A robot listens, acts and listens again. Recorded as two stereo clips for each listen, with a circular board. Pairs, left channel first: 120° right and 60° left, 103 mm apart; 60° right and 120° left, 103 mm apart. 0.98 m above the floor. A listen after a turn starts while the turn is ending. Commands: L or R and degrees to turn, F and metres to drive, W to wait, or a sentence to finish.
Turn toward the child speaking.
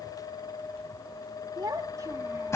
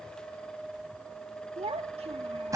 L115
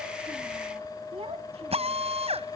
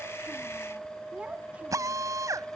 L45
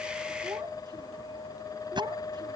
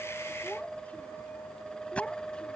L20
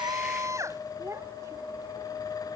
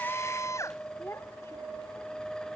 Found it: a child speaking, straight ahead.